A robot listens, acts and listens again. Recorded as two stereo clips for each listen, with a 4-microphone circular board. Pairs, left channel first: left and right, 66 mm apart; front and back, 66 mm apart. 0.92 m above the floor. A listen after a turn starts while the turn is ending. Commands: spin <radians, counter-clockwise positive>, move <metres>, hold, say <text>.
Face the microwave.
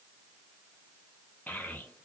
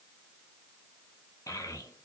hold
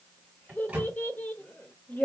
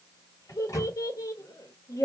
spin -0.44
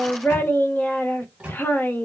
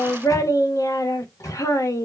spin -0.35
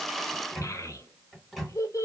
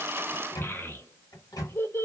say Found it: a microwave, straight ahead, 1 to 2 m away.